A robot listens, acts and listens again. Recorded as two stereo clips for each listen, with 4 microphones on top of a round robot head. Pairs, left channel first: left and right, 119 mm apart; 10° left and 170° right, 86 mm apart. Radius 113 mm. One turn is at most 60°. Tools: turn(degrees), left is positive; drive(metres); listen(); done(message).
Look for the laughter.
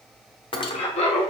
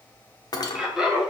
turn(degrees=60)
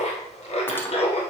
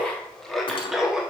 turn(degrees=60)
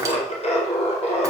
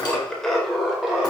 turn(degrees=60)
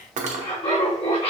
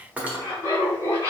turn(degrees=60)
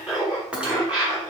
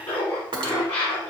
turn(degrees=-10)
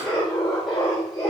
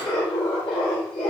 done("Found it: laughter, straight ahead.")